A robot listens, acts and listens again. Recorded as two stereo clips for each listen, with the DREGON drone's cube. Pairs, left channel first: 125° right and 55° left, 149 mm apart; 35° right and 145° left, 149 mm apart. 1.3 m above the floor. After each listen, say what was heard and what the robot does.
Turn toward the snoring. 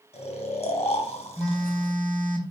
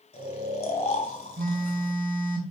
The snoring: 80° right. Turn 80° right.
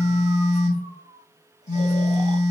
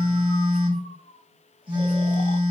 Keep listening.
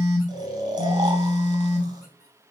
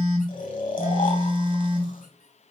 Found it: snoring, straight ahead.